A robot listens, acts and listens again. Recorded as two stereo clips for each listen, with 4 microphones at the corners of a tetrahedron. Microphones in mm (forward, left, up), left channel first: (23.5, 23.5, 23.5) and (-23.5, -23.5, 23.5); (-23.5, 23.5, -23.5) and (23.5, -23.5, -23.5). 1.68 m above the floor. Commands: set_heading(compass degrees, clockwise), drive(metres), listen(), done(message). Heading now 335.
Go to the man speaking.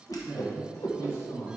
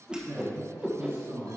drive(1.0)
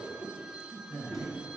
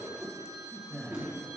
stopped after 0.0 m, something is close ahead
done("Blocked. The man speaking is further on, straight ahead.")